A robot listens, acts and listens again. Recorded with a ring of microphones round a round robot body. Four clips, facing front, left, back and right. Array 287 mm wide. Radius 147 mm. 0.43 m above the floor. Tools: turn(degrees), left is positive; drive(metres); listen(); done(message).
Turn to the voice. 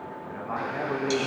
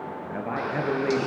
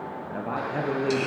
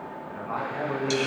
turn(degrees=140)
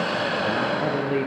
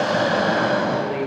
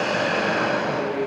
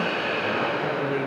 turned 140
turn(degrees=-10)
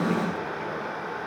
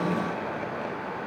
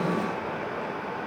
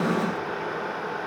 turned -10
listen()
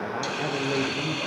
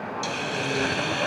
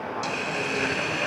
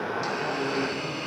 listen()
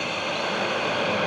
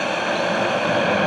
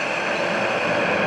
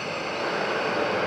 done("Facing where the man speaking came from. I can't hear it now.")